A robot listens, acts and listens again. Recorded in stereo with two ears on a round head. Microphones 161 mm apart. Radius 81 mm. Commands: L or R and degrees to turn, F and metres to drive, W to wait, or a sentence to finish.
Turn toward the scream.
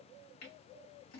W
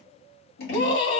L35
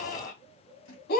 L110
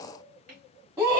R20
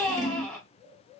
Facing the scream.